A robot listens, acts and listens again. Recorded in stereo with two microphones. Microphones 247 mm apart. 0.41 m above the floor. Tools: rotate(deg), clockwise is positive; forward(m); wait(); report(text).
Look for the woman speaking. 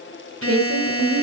rotate(65)
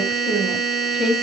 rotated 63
report("Facing the woman speaking, 2 to 4 m away.")